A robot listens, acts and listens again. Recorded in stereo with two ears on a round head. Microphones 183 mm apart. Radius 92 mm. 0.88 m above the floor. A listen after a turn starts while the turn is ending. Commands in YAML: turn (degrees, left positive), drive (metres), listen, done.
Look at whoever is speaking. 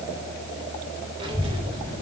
turn: -25
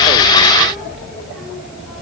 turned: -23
done: "Facing the child speaking, 2 to 4 m away."